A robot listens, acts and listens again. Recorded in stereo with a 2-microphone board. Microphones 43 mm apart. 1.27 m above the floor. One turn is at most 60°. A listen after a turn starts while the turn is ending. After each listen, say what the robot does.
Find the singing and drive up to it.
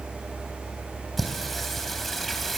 Turn 30° left.
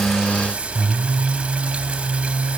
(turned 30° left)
Turn 30° right.
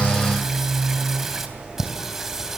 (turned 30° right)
Turn 10° right.
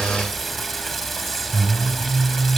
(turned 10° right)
Drive 1.0 m forward.
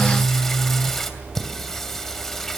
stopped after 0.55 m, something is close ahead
Turn 10° left.
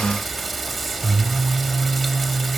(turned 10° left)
Blocked. The singing is further on, straight ahead.